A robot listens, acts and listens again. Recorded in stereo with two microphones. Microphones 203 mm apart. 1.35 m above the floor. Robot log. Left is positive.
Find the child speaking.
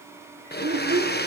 cmd yaw -90
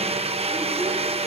cmd idle
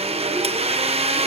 cmd idle
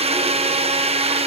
end: Facing where the child speaking came from. I can't hear it now.